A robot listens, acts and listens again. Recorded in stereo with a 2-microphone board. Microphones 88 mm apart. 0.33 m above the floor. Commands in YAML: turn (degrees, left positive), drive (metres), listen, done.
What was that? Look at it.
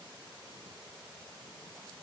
listen: true
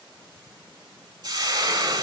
turn: -45
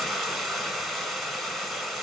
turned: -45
done: "Facing the frying, under 1 m away."